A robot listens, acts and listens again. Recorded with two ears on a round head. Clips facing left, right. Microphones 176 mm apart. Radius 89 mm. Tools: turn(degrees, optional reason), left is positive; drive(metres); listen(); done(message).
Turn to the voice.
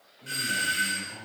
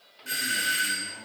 turn(degrees=60, reason="The man speaking: about 60° left or 120° left.")
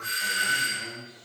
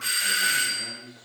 done("Found it: a man speaking, straight ahead, over 4 m away.")